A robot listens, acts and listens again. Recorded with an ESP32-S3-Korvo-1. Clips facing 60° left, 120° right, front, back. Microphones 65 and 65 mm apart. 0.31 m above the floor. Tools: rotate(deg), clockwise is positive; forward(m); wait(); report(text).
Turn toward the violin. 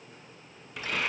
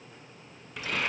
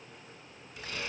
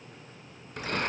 wait()
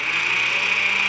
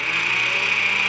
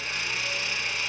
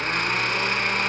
wait()
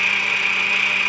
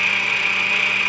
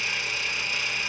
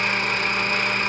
report("I can't make out a violin, only a blender.")